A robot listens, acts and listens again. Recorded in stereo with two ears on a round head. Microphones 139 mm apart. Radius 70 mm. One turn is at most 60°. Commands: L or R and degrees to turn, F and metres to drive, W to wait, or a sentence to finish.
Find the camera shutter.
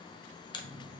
L30
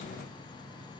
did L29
W
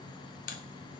L60
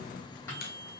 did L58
L60
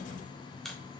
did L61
Facing the camera shutter, under 1 m away.